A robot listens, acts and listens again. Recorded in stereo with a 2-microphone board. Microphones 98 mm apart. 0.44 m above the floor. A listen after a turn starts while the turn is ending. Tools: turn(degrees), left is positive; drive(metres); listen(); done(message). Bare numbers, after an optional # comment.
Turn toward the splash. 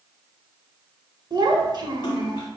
# The splash: about 45° left or 135° left.
turn(45)
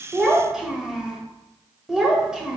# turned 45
listen()
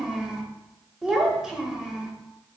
done("I heard a splash, but can't make it out now. It was about straight ahead or 90° left.")